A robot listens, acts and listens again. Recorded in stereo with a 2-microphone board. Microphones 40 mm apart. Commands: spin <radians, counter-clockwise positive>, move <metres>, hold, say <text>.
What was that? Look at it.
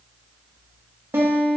spin -1.22
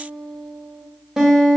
spin -0.26
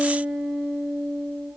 say Facing the guitar.